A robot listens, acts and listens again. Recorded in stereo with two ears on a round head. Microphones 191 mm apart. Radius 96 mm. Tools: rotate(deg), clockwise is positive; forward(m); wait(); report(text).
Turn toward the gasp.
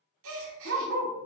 rotate(70)
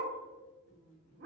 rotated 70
wait()
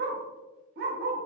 report("I heard a gasp, but can't make it out now. It was about straight ahead or 40° right.")